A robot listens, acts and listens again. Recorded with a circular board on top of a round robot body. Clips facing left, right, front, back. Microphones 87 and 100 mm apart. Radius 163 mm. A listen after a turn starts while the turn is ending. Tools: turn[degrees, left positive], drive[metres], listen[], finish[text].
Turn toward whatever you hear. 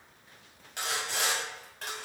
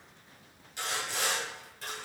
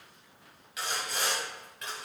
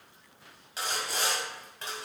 Thought: The sawing: 125° left.
Action: turn[125]
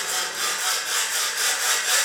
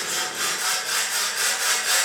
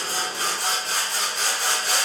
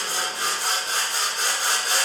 Action: finish[Found it: sawing, straight ahead, 2 to 4 m away.]